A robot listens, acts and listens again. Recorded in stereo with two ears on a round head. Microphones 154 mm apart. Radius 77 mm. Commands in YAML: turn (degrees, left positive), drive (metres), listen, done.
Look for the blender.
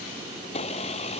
turn: 40
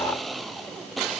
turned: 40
done: "Found it: a blender, straight ahead."